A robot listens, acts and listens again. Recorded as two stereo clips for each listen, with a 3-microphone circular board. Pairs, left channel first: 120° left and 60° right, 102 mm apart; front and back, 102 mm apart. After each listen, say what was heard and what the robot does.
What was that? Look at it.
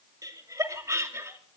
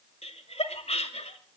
Found it: laughter, straight ahead, 2 to 4 m away.